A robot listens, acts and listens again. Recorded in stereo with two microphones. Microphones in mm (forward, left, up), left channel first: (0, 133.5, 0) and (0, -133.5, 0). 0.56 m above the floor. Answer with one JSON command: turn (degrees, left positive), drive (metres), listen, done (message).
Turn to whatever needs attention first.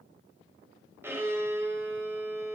{"listen": true}
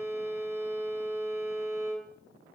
{"listen": true}
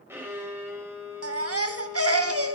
{"turn": -60}
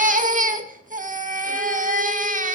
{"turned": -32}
{"turn": -30}
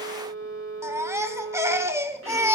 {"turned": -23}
{"turn": -10}
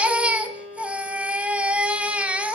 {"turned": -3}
{"done": "Found it: a baby crying, straight ahead, under 1 m away."}